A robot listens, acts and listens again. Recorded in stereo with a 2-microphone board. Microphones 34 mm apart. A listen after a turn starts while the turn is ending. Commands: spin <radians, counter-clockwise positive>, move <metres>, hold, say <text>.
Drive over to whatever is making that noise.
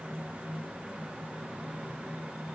hold
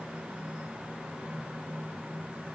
hold
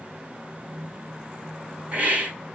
spin -0.70
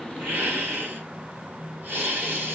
spin -1.66
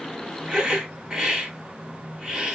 spin -0.44
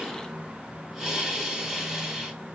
spin -0.26
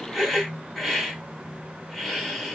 move 1.0
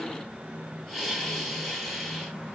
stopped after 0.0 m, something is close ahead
say Blocked. The hiss is further on, straight ahead.